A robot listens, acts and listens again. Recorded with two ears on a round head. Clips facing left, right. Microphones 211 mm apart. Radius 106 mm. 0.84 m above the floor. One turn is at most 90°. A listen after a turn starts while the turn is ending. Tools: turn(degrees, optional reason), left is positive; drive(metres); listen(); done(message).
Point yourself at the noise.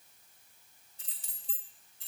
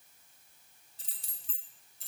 turn(degrees=-40, reason="The keys jangling: about 40° right or 140° right.")
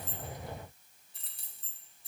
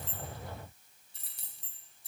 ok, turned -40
turn(degrees=-90, reason="So it is at 90° right.")
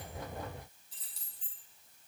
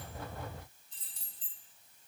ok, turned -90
turn(degrees=10, reason="The keys jangling is now 10° left.")
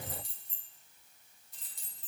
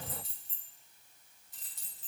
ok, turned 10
done("Facing the keys jangling.")